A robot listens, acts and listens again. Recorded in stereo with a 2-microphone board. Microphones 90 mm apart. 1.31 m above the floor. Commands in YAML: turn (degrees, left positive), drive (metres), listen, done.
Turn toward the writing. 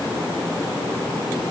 listen: true
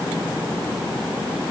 listen: true
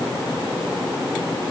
done: "I can't make out writing."